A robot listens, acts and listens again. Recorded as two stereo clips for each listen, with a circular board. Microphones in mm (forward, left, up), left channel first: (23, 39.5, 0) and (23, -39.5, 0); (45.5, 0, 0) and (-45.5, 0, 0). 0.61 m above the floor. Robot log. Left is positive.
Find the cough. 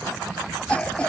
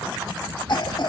note: The cough: 20° left.
cmd yaw +20
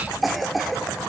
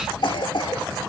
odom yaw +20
end: Found it: a cough, straight ahead, 1 to 2 m away.